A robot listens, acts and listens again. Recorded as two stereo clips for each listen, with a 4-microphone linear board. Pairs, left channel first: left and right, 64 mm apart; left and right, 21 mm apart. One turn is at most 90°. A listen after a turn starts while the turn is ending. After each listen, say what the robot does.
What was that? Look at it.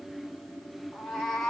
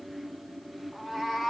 Turn 30° left.
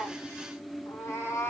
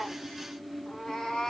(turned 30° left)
Turn 90° left.
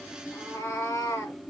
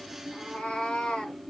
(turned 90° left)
Turn 55° left.
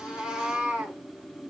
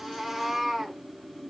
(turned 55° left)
Turn 20° right.
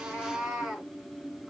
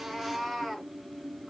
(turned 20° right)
Found it: a cat meowing, straight ahead.